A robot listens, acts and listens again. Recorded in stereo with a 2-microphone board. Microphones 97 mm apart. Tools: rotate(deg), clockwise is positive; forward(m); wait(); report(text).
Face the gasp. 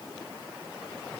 wait()
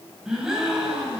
rotate(30)
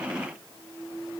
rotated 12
wait()
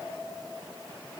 report("I heard a gasp, but can't make it out now. It was about 5° left or 160° right.")